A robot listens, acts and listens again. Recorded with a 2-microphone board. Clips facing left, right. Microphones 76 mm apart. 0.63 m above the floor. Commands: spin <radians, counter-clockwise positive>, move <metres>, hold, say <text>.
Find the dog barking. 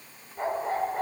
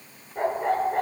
spin -1.13
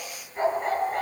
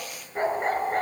spin -0.70
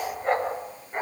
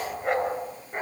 say Facing the dog barking.